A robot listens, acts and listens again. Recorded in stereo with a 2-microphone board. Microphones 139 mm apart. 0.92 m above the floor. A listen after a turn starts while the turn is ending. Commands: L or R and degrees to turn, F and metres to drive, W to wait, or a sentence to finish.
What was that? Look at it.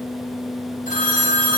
L65
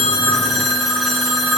Facing the phone ringing, over 4 m away.